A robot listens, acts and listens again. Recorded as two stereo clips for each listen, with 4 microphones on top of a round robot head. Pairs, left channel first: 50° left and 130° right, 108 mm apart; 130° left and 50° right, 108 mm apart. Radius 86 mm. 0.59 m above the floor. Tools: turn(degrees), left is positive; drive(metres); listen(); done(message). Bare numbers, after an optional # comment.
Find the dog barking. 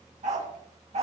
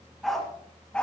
# The dog barking: 150° right.
turn(-150)
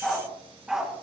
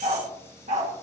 # The dog barking is now 45° right.
turn(-45)
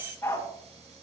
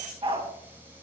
# The dog barking is now 15° right.
turn(-15)
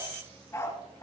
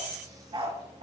# The dog barking is now 15° right.
turn(-15)
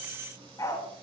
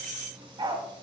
# The dog barking is now 10° right.
turn(-10)
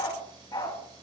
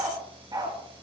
done("Facing the dog barking, 2 to 4 m away.")